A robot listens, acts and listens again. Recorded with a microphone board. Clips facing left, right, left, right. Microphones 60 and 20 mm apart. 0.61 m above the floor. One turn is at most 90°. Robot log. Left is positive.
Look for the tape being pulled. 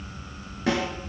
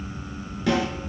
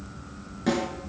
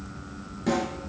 cmd idle
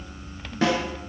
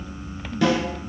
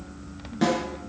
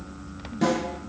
cmd idle
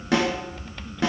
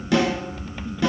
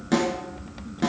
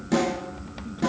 end: I can't make out tape being pulled, only a snare drum.